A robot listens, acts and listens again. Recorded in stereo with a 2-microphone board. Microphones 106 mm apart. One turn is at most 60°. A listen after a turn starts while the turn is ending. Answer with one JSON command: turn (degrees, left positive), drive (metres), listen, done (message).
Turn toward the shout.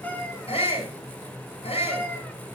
{"turn": 60}
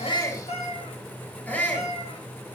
{"turn": 15}
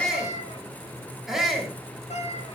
{"done": "Found it: a shout, straight ahead."}